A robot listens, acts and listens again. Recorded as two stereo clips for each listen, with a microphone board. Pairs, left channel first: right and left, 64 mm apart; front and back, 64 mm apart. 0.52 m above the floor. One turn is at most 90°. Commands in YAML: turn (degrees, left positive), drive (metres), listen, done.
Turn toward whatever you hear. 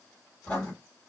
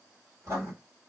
turn: -90
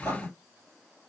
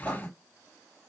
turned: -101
turn: -75
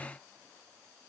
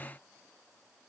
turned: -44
turn: -30
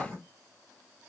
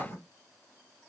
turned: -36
done: "Facing the writing."